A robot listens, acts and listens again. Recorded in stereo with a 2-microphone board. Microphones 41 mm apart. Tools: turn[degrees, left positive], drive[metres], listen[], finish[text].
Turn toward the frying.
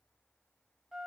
Action: listen[]
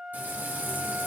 Thought: The frying: about 45° right or 135° right.
Action: turn[-45]
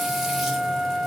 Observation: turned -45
Action: listen[]
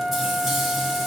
Action: finish[Facing the frying, 1 to 2 m away.]